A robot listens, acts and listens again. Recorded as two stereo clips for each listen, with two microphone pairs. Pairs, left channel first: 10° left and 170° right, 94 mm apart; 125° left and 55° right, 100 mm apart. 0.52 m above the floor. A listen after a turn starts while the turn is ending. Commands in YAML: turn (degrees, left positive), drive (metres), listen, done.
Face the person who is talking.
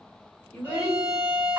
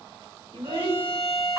turn: -65
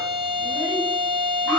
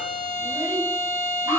listen: true
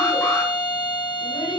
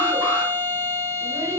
listen: true
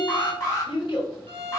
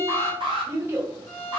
done: "Found it: a child speaking, straight ahead, 1 to 2 m away."